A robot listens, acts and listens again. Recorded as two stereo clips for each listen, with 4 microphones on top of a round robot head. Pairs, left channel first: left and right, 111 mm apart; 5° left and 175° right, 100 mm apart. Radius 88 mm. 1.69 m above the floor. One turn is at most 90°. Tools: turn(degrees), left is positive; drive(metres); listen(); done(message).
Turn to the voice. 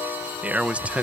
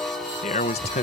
turn(degrees=-10)
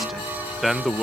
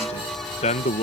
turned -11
done("Facing the man speaking.")